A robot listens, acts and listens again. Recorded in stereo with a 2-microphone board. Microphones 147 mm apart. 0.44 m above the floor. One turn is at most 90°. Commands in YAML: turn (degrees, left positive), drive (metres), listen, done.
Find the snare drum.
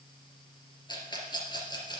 listen: true
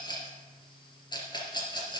listen: true
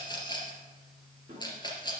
turn: -40
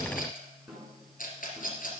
done: "Facing the snare drum, over 4 m away."